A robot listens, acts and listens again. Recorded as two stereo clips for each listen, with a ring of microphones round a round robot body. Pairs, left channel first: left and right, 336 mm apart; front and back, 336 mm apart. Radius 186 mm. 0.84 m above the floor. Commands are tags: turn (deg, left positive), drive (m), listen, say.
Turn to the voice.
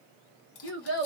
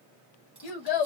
<turn deg="30"/>
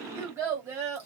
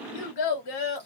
<say>Facing the child speaking, 1 to 2 m away.</say>